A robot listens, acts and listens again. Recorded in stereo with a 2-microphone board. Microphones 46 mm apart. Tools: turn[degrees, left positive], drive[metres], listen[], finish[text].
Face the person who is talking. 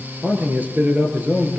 Thought: The man speaking: about 35° right or 145° right.
Action: turn[-35]
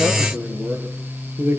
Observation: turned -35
Thought: So it is at 105° right.
Action: turn[-105]
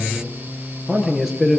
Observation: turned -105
Action: finish[Facing the man speaking, over 4 m away.]